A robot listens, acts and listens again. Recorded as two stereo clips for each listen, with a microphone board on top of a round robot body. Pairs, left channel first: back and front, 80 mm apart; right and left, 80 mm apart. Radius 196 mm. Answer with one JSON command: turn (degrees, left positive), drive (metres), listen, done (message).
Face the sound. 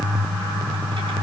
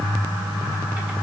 {"listen": true}
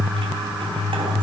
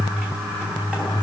{"listen": true}
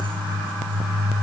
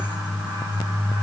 {"done": "I can't make out anything to turn to."}